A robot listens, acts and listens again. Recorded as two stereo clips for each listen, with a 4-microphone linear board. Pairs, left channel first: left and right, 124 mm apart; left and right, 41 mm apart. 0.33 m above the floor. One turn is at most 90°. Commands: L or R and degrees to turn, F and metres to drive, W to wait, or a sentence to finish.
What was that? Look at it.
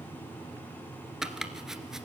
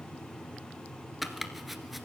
R30
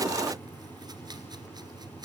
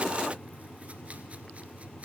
R90
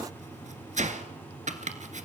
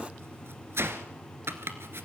R80
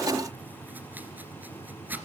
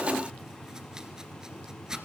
R15
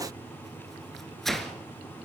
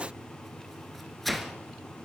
Found it: chopping, straight ahead, 1 to 2 m away.